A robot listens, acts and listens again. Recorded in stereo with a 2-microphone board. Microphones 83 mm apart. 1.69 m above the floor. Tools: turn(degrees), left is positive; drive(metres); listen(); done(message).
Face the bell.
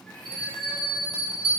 turn(degrees=90)
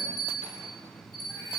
done("Facing the bell.")